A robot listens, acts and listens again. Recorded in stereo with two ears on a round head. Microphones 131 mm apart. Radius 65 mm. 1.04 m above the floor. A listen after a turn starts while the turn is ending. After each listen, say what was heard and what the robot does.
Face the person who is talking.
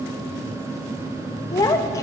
The child speaking: about 20° left or 160° left. Turn 20° left.
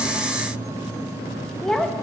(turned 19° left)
Facing the child speaking, under 1 m away.